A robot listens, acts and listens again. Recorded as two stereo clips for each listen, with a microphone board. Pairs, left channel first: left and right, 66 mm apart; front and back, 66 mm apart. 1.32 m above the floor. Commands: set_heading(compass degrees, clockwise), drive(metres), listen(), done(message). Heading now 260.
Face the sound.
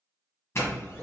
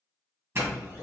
set_heading(120)
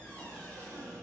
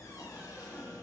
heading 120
set_heading(95)
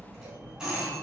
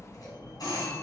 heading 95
done("Facing the doorbell, 1 to 2 m away.")